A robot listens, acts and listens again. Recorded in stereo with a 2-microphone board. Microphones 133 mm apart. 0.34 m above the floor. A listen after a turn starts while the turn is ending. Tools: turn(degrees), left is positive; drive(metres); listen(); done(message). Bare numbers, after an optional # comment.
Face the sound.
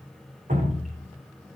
turn(-90)
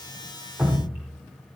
# So it is at 10° right.
turn(-10)
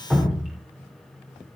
done("Facing the dripping.")